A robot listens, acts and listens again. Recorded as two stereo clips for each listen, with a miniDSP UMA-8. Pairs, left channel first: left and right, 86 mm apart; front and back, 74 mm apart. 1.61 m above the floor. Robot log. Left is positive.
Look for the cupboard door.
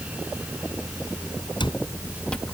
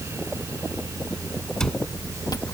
note: The cupboard door: 80° left.
cmd yaw +80
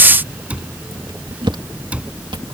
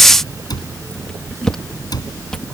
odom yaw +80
note: The cupboard door is now 15° right.
cmd yaw -15
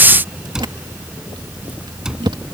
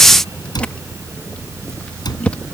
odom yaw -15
note: The cupboard door is now 10° right.
cmd yaw -10
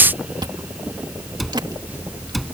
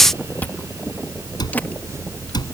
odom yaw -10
end: Facing the cupboard door.